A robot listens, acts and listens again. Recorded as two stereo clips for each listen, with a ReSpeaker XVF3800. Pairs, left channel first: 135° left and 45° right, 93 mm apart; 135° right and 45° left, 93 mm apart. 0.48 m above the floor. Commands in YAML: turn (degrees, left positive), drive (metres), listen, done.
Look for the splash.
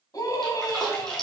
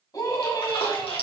turn: -140
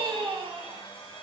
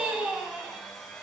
done: "I heard a splash from this way, but can't make it out now."